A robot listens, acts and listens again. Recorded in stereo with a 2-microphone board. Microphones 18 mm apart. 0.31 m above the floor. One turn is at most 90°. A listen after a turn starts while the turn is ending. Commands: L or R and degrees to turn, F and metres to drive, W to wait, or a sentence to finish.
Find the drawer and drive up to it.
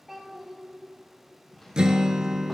L20
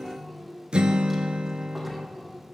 W
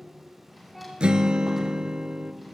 F1.0
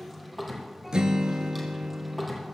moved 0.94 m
F1.0
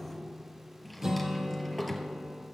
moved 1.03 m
L10
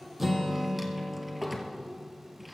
F1.0
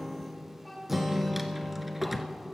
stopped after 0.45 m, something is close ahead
I am next to the drawer.